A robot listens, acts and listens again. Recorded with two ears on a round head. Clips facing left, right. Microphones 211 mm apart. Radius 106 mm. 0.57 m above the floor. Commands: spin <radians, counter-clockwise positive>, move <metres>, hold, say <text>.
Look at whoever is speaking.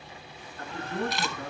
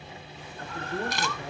spin 0.87
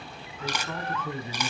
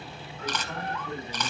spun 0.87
spin 1.40
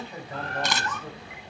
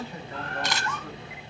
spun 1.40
spin 0.26
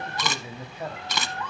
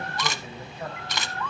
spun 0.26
spin 0.17
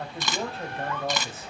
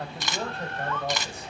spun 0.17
say Found it: a man speaking, straight ahead.